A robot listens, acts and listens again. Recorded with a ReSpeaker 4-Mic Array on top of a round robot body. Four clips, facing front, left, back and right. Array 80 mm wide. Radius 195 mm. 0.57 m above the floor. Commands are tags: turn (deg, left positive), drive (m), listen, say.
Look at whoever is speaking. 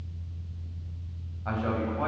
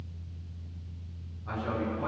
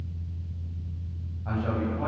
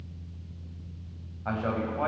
<turn deg="-75"/>
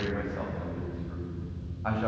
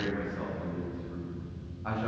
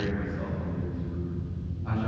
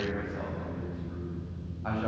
<turn deg="-15"/>
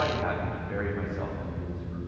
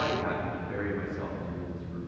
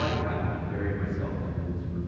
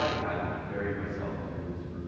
<say>Found it: a man speaking, straight ahead, over 4 m away.</say>